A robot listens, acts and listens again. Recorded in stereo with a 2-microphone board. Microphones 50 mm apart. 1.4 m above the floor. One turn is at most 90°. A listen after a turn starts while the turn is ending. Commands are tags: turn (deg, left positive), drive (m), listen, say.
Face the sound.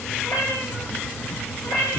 <turn deg="65"/>
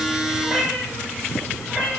<turn deg="-10"/>
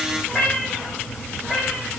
<say>Found it: a cat meowing, straight ahead.</say>